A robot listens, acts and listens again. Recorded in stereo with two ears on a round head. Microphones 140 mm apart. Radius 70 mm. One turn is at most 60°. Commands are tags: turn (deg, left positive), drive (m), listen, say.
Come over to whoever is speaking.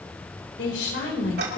<turn deg="60"/>
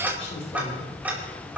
<turn deg="30"/>
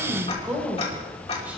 <turn deg="-10"/>
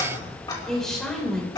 <drive m="1.0"/>
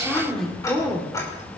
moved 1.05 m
<drive m="1.0"/>
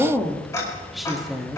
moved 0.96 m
<drive m="1.0"/>
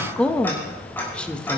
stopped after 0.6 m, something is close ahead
<say>Arrived at the woman speaking, straight ahead.</say>